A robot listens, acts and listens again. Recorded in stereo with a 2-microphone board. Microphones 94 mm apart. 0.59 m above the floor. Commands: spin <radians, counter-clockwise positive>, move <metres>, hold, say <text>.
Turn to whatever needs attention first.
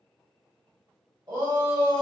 spin -0.96
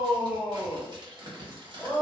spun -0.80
spin -0.17
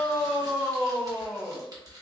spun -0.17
say Found it: a shout, straight ahead.